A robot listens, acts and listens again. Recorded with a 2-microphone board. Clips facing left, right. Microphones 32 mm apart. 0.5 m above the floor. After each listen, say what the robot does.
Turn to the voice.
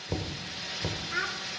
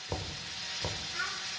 Turn 75° left.
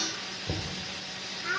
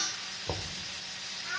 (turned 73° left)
Turn 35° left.
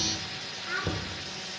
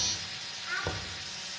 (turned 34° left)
Found it: a child speaking, straight ahead.